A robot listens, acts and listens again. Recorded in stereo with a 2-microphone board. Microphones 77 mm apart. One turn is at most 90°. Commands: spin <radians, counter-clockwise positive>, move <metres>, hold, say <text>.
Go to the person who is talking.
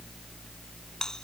hold
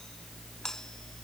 hold
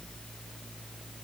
say I can't make out anyone speaking to turn to.